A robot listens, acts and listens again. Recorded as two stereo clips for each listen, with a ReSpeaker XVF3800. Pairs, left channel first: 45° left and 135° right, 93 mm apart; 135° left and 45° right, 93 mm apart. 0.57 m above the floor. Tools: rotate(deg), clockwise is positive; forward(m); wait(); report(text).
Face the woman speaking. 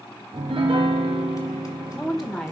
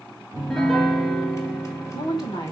rotate(-125)
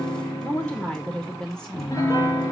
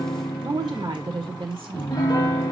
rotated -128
rotate(40)
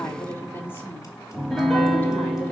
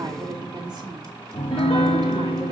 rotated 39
rotate(20)
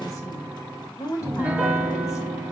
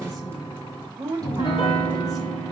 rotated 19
report("Found it: a woman speaking, straight ahead, 2 to 4 m away.")